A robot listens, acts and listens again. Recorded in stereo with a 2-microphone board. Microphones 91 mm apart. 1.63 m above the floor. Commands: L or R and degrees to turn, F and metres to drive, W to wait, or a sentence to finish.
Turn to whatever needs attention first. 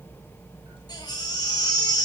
L50
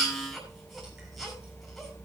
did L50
Found it: a baby crying, straight ahead, over 4 m away.